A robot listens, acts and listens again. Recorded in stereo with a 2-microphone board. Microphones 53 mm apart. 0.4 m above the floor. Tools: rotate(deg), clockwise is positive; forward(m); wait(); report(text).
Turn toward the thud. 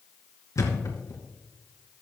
rotate(-90)
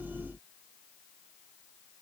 report("Facing where the thud came from. I can't hear it now.")